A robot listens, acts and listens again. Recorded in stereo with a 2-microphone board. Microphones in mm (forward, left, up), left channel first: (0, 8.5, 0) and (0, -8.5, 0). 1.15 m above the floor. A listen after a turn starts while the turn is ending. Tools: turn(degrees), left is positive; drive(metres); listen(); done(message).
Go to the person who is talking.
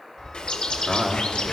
turn(degrees=-40)
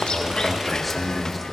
drive(metres=1.0)
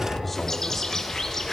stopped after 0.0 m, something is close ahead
turn(degrees=10)
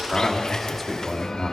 done("Blocked. The man speaking is further on, straight ahead.")